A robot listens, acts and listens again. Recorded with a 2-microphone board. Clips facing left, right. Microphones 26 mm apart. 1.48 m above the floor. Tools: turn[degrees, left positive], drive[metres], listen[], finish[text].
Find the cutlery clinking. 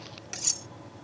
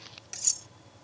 Thought: The cutlery clinking: about 15° left or 165° left.
Action: turn[15]
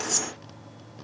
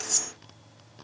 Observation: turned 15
Action: listen[]
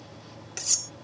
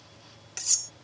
Action: finish[Facing the cutlery clinking.]